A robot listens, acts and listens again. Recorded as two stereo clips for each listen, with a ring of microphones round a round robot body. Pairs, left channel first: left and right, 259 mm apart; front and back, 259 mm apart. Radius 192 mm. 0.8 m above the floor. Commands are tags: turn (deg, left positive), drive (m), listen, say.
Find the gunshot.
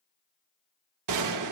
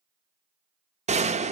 <turn deg="-115"/>
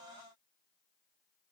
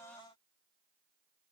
<say>I heard a gunshot from this way, but can't make it out now.</say>